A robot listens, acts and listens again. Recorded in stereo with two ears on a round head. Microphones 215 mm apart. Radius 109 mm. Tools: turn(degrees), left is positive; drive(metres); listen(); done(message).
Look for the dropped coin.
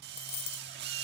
turn(degrees=45)
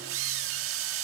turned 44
listen()
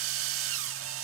done("I heard a dropped coin, but can't make it out now. It was about straight ahead or 90° left.")